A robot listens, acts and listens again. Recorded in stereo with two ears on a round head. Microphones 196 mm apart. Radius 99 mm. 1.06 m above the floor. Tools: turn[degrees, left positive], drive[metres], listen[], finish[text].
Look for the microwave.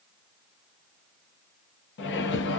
Thought: The microwave: about 50° left or 130° left.
Action: turn[50]
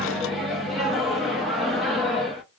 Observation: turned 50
Action: finish[Facing the microwave.]